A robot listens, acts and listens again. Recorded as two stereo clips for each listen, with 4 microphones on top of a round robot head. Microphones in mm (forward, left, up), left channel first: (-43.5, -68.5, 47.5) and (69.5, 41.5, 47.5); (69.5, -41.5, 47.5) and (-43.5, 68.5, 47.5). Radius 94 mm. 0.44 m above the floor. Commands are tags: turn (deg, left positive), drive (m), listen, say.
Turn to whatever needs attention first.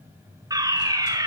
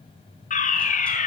<turn deg="-20"/>
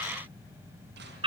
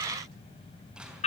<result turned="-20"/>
<say>Found it: a fire alarm, straight ahead.</say>